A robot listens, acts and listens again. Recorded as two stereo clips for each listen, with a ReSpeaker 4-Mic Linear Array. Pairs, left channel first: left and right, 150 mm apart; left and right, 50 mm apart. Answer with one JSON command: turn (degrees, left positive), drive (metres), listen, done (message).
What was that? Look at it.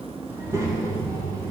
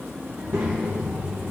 {"turn": -25}
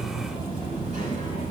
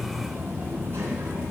{"turn": -125}
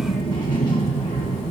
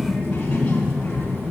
{"turn": 40}
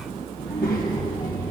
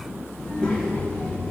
{"turn": 10}
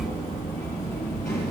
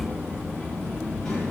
{"done": "Facing the child speaking, 2 to 4 m away."}